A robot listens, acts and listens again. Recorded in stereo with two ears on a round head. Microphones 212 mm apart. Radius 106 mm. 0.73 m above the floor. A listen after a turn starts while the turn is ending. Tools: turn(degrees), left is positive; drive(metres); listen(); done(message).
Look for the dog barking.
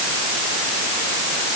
listen()
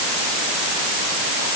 listen()
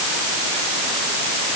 done("I can't make out a dog barking to turn to.")